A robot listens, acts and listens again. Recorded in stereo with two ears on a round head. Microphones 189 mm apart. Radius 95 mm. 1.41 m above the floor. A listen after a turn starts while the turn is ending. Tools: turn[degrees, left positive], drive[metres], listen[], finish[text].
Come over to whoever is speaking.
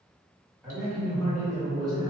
Action: turn[30]
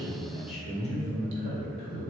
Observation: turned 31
Thought: So it is at 145° left.
Action: turn[145]
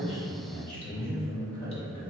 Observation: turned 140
Action: drive[1.0]
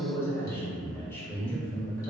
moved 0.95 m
Thought: The man speaking is now 10° left.
Action: turn[10]
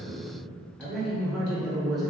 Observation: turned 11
Action: drive[1.0]
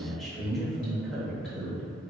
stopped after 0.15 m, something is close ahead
Action: finish[I am next to the man speaking.]